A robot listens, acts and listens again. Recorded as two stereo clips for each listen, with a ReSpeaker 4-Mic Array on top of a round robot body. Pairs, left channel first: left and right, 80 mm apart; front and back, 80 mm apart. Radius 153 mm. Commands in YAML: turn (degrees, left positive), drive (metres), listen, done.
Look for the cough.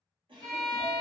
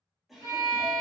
turn: -90
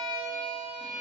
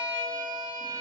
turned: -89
listen: true
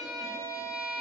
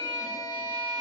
listen: true
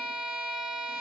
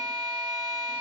done: "Facing where the cough came from. I can't hear it now."